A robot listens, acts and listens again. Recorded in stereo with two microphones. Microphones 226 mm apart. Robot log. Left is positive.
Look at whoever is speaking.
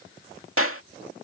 cmd idle
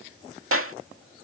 cmd idle
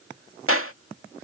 end: I can't make out anyone speaking, only a clap.